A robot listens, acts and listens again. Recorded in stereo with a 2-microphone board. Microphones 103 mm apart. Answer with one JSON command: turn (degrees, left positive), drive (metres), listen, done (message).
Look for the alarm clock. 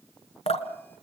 {"listen": true}
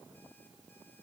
{"listen": true}
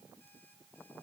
{"done": "I can't make out an alarm clock, only dripping."}